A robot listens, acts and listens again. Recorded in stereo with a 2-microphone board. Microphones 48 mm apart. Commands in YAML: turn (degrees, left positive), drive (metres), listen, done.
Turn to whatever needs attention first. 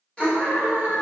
turn: 20
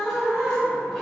done: "Facing the scream."